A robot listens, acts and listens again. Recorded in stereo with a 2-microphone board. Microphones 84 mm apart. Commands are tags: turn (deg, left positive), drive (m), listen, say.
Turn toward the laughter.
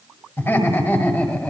<turn deg="20"/>
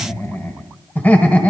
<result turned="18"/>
<turn deg="30"/>
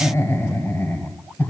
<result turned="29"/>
<turn deg="20"/>
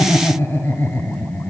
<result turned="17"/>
<turn deg="25"/>
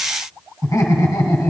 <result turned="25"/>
<turn deg="135"/>
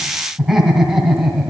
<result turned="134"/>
<say>Facing the laughter.</say>